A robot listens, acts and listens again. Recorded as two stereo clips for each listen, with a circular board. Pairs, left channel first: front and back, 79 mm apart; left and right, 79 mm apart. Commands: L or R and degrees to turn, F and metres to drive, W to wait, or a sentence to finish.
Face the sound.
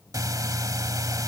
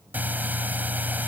R155
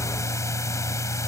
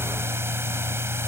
R40
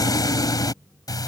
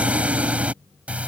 R20
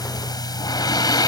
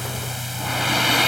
Found it: breathing, straight ahead.